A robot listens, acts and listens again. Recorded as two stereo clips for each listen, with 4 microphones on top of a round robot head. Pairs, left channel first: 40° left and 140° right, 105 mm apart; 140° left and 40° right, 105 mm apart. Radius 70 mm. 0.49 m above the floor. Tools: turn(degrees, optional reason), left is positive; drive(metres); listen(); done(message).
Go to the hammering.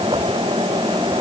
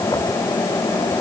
listen()
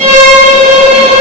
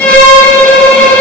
listen()
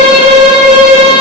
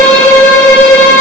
done("I can't make out hammering, only a violin.")